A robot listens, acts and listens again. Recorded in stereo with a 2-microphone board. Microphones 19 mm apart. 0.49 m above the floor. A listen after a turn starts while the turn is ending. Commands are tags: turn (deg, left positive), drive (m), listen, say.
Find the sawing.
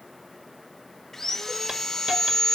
<turn deg="25"/>
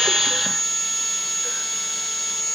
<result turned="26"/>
<say>Facing the sawing.</say>